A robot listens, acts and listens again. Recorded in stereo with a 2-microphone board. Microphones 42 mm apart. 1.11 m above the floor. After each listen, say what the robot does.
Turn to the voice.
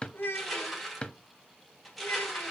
Turn 60° left.
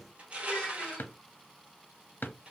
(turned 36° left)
Keep listening.
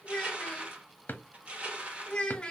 Turn 25° left.
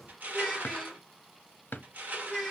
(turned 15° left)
Turn 10° left.
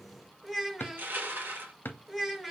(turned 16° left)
Found it: a child speaking, straight ahead, 1 to 2 m away.